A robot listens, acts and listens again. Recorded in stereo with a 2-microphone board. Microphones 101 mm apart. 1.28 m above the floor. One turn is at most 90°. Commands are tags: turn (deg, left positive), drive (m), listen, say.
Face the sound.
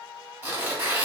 <turn deg="-20"/>
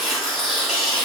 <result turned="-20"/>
<say>Found it: tearing paper, straight ahead, 1 to 2 m away.</say>